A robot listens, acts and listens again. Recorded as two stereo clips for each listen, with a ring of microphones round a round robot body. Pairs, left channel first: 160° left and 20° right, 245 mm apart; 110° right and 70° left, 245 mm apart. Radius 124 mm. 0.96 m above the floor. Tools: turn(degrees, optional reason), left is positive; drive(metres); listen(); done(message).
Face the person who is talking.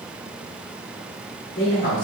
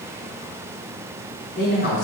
turn(degrees=-160, reason="The man speaking: 160° right.")
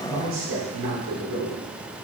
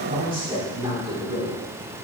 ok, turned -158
done("Facing the man speaking.")